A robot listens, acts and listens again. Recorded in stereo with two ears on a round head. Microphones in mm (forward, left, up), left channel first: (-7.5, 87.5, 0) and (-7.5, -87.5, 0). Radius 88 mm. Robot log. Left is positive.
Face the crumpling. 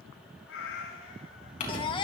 note: The crumpling: about 40° left or 140° left.
cmd yaw +40
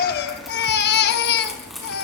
end: Facing the crumpling, over 4 m away.